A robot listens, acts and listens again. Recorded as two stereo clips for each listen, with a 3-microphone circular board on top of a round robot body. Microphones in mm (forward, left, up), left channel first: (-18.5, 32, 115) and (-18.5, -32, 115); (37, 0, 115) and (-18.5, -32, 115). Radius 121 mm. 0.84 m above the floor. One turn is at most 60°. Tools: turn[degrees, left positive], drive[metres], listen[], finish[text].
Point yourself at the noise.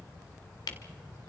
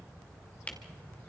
Thought: The camera shutter: 100° left.
Action: turn[60]
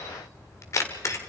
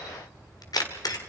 Thought: The camera shutter is now 45° left.
Action: turn[45]
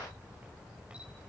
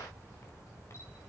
Action: listen[]
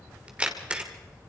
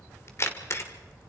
Thought: The camera shutter is now 15° right.
Action: turn[-15]
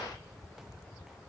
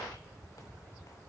Action: listen[]
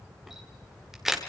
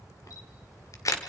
Action: finish[Facing the camera shutter, 2 to 4 m away.]